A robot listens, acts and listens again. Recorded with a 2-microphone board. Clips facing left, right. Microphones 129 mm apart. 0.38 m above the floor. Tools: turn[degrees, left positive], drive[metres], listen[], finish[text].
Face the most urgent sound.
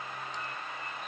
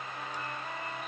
Action: listen[]
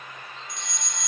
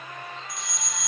Action: turn[-30]
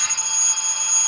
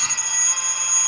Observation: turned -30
Thought: So it is at 25° left.
Action: turn[25]
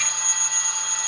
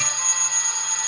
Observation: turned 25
Action: finish[Found it: a fire alarm, straight ahead.]